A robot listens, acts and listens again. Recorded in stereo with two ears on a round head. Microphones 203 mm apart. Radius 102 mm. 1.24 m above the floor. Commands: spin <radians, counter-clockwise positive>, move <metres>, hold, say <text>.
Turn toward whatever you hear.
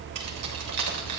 spin -1.57
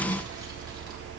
hold
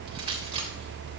spin -0.44
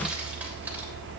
hold
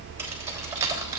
spin -0.26
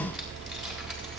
hold
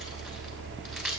say Found it: keys jangling, straight ahead, 2 to 4 m away.